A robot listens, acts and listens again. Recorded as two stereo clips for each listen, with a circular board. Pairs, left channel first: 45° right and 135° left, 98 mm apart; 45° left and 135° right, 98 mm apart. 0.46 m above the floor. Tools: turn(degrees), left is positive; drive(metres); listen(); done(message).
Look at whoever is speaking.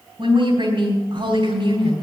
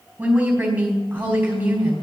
turn(degrees=150)
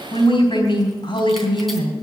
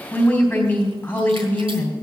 turn(degrees=-25)
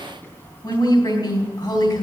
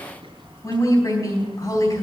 done("Found it: a woman speaking, straight ahead, 2 to 4 m away.")